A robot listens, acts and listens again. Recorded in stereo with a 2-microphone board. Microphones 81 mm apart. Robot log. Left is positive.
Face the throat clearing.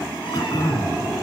note: The throat clearing: about 50° left or 130° left.
cmd yaw +50
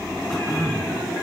end: Found it: throat clearing, straight ahead, 2 to 4 m away.